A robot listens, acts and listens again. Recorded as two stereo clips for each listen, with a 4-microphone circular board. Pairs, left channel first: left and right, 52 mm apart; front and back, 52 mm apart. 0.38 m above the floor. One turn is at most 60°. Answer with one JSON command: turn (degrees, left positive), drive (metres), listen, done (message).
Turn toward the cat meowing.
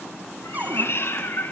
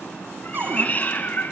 {"turn": 50}
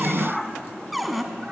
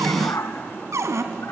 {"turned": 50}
{"done": "Facing the cat meowing, 1 to 2 m away."}